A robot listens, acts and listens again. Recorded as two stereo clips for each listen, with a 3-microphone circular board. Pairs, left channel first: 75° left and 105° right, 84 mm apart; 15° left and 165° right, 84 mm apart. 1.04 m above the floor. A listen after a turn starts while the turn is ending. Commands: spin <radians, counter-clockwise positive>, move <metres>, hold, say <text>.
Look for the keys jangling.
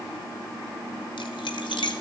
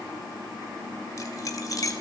spin 1.05
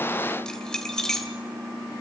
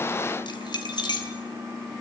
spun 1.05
spin -0.17
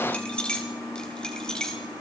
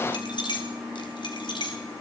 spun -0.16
say Facing the keys jangling.